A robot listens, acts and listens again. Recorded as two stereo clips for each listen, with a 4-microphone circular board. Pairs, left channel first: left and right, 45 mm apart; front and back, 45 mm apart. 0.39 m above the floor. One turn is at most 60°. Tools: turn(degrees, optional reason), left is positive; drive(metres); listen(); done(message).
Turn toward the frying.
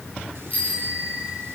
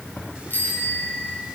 listen()
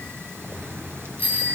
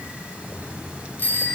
listen()
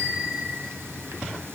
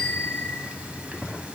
done("I can't make out frying to turn to.")